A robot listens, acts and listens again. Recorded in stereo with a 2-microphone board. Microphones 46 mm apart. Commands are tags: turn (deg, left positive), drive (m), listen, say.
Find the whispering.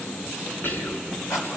<turn deg="50"/>
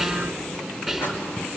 <say>Found it: whispering, straight ahead.</say>